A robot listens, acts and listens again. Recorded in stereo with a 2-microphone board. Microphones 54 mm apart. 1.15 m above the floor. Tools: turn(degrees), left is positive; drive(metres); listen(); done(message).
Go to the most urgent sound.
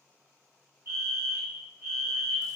turn(degrees=-50)
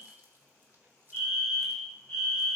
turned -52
drive(metres=1.0)
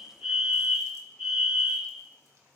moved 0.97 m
drive(metres=1.0)
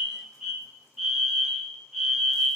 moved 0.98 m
turn(degrees=-10)
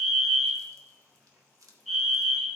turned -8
drive(metres=1.0)
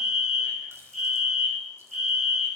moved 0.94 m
drive(metres=1.0)
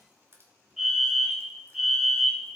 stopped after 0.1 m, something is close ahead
turn(degrees=-10)
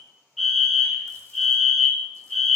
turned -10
done("Arrived at the fire alarm, straight ahead.")